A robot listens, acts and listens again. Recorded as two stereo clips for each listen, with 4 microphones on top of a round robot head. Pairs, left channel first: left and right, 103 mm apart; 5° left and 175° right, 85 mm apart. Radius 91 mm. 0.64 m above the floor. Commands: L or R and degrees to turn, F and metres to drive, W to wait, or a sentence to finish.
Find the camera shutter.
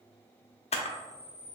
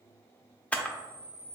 L80
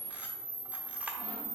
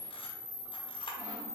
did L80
R15
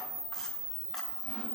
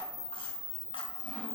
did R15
Facing the camera shutter, under 1 m away.